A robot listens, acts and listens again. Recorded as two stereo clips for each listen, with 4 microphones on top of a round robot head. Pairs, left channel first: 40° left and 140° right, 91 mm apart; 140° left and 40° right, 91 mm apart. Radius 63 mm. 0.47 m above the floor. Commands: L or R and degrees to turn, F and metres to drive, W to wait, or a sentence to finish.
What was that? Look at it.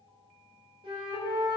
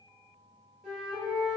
R125
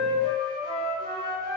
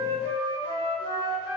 R45
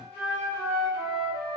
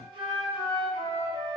R25
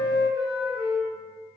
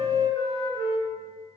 R10
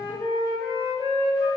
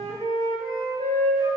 Found it: a flute, straight ahead.